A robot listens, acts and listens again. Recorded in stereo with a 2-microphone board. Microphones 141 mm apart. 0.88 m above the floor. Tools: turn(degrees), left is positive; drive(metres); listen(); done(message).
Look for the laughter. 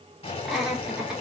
turn(degrees=-30)
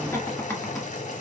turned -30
turn(degrees=15)
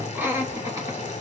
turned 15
turn(degrees=-15)
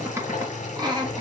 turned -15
turn(degrees=-30)
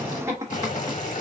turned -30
turn(degrees=-20)
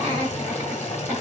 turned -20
turn(degrees=-15)
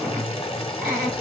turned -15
done("Facing the laughter.")